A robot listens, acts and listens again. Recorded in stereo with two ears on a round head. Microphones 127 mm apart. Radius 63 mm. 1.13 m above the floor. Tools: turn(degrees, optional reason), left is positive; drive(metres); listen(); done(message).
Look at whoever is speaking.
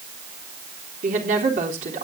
turn(degrees=-55, reason="The woman speaking: about 55° right or 125° right.")
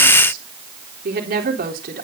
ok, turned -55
turn(degrees=-70, reason="So it is at 70° right.")
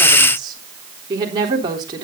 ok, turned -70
turn(degrees=-30, reason="The woman speaking is now 30° right.")
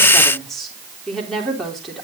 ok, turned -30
done("Found it: a woman speaking, straight ahead.")